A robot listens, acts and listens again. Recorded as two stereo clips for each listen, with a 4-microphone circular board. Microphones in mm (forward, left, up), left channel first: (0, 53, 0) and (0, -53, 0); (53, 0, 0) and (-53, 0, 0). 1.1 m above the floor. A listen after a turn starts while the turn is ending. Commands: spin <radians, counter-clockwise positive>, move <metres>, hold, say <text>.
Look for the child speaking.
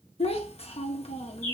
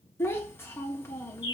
spin 1.22
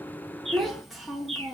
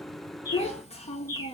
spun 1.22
say Found it: a child speaking, straight ahead.